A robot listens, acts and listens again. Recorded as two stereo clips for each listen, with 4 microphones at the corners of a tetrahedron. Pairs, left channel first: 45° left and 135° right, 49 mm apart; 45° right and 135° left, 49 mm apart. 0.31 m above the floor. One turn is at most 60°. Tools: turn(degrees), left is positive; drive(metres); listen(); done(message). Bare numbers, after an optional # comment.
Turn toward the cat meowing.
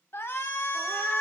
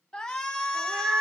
# The cat meowing: 90° left.
turn(60)
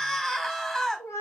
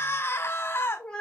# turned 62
# The cat meowing is now 30° left.
turn(30)
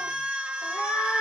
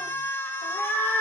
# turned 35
done("Found it: a cat meowing, straight ahead.")